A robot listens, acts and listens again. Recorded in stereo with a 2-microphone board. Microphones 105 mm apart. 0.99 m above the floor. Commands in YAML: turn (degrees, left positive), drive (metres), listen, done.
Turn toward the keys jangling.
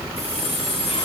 turn: -70
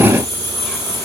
turn: -35
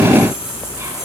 done: "Facing the keys jangling, over 4 m away."